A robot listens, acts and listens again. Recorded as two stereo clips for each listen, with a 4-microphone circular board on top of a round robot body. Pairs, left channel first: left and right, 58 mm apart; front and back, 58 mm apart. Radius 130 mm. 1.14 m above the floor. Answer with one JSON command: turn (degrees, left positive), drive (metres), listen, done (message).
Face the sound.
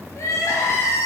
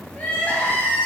{"turn": 60}
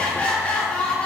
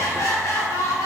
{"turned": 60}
{"turn": 20}
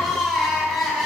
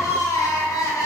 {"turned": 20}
{"done": "Facing the crying, 1 to 2 m away."}